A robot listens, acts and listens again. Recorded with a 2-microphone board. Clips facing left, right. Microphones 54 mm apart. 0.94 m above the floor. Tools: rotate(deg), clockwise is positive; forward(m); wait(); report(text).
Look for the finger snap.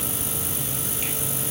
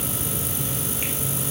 wait()
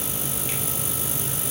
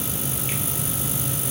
wait()
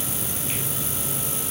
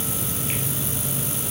report("I can't make out a finger snap to turn to.")